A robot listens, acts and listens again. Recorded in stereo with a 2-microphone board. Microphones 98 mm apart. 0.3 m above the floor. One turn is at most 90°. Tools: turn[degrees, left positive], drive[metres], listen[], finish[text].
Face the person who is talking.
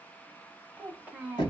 Thought: The child speaking: about 15° right or 165° right.
Action: turn[-15]
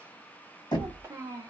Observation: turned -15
Thought: So it is at 150° right.
Action: turn[-90]
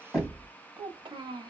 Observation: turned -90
Thought: The child speaking is now 90° right.
Action: turn[-90]
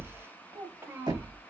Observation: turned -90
Thought: The child speaking is now 35° right.
Action: turn[-35]
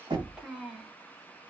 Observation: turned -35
Thought: The child speaking is now 10° right.
Action: turn[-10]
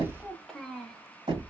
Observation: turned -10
Action: finish[Found it: a child speaking, straight ahead.]